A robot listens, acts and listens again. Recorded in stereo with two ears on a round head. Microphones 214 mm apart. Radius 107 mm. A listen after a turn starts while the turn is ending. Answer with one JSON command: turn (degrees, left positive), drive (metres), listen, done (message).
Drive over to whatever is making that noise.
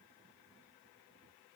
{"listen": true}
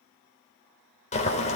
{"turn": 30}
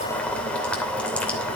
{"drive": 1.0}
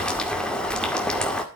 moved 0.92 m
{"drive": 1.0}
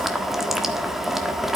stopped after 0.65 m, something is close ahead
{"done": "Arrived at the boiling, straight ahead."}